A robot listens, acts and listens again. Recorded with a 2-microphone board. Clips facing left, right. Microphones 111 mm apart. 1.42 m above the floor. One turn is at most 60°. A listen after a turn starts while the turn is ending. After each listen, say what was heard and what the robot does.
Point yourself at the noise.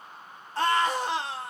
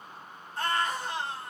Turn 60° left.
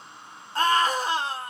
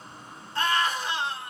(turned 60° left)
So it is at 40° left. Turn 40° left.
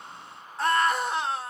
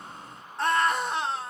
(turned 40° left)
Facing the scream, 1 to 2 m away.